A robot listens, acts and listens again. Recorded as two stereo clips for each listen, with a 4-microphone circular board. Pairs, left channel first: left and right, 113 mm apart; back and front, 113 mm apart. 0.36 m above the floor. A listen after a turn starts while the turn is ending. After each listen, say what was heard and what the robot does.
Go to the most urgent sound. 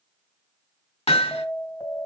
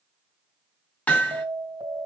The alarm: 35° left. Turn 35° left.
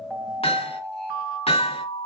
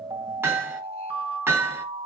Drive 1.0 m forward.
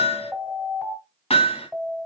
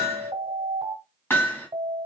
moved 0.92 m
Drive 1.0 m forward.
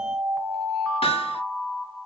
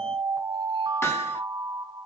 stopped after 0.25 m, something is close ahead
Arrived at the alarm, straight ahead.